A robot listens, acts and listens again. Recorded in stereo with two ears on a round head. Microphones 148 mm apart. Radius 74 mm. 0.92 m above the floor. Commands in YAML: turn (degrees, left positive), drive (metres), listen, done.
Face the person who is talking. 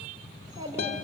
turn: -25
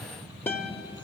listen: true
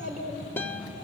turn: -130
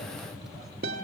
listen: true
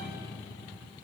listen: true
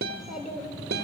done: "Found it: a child speaking, straight ahead."